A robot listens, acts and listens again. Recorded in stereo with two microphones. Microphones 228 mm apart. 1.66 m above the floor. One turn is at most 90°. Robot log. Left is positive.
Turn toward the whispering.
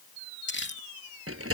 cmd idle
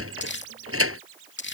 cmd idle
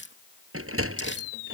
end: I can't make out whispering, only crumpling and a sliding door.